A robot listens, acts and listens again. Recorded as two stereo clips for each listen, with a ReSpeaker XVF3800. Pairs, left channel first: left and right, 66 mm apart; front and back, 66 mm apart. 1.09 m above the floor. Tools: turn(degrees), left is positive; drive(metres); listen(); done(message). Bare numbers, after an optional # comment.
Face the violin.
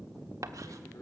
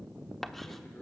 listen()
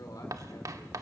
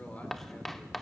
listen()
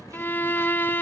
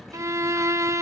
# The violin: 145° left.
turn(145)
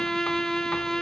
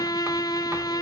done("Found it: a violin, straight ahead.")